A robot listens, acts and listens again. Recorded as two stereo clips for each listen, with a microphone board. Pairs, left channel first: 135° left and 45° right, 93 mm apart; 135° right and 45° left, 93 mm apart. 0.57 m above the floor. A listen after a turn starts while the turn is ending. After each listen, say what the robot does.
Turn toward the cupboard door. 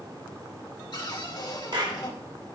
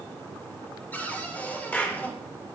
Turn 155° left.
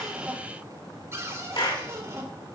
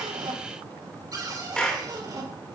Turn 10° left.
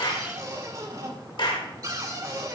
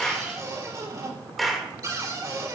Facing the cupboard door.